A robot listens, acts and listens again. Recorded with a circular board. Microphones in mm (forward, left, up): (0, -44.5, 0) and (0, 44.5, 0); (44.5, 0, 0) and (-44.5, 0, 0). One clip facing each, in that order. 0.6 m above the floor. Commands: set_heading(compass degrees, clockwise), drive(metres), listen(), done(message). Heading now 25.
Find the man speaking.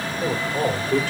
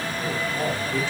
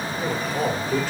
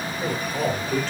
set_heading(105)
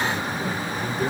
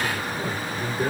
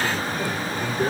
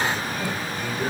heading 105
set_heading(65)
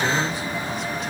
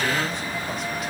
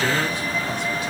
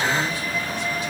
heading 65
listen()
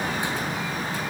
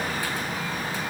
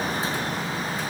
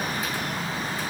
listen()
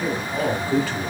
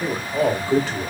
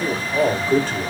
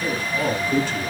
set_heading(35)
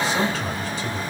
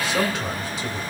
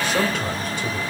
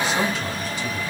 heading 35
done("Facing the man speaking, 1 to 2 m away.")